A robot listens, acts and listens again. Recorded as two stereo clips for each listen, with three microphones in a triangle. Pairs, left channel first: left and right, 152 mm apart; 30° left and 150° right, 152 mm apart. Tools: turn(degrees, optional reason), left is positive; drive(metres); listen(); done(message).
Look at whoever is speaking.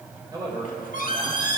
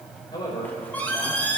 turn(degrees=-35, reason="The man speaking: 35° right.")
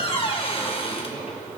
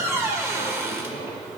listen()
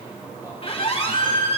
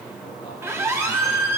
listen()
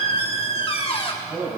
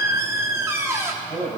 turn(degrees=-30, reason="The man speaking is now 30° right.")
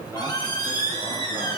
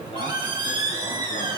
listen()
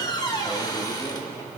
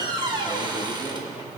listen()
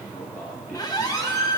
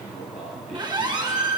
turn(degrees=-20, reason="The man speaking is now 20° right.")
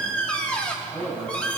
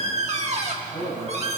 done("Facing the man speaking, over 4 m away.")